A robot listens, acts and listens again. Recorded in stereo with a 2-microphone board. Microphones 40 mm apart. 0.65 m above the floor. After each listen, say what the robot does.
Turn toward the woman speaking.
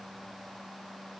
Keep listening.
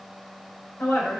Turn 65° left.
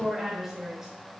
Turn 10° right.
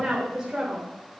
Turn 20° right.
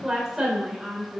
Turn 20° right.
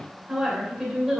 Found it: a woman speaking, straight ahead, 2 to 4 m away.